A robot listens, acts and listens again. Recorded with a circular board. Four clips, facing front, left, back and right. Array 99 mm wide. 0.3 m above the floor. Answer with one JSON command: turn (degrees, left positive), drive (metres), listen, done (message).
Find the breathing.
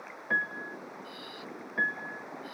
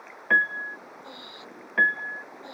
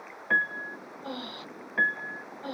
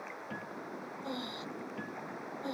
{"turn": -170}
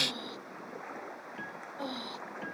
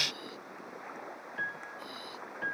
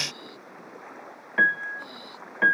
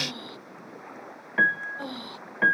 {"turn": -55}
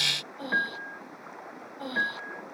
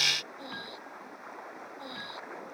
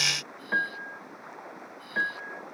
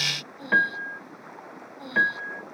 {"done": "Facing the breathing."}